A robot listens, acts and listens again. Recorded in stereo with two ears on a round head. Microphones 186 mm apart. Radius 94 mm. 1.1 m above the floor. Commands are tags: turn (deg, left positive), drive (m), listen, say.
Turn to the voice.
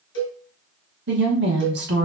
<turn deg="-55"/>
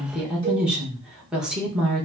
<say>Facing the woman speaking.</say>